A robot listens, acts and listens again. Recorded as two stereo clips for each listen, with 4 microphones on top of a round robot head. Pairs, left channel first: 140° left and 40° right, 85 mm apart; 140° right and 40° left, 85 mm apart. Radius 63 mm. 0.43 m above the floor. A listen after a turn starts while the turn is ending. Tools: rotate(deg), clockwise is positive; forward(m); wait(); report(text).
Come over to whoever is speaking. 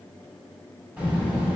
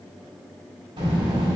rotate(-35)
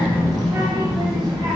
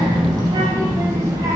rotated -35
forward(1.0)
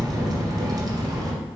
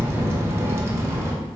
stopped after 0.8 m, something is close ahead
rotate(10)
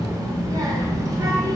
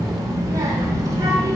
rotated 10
report("I am next to the child speaking.")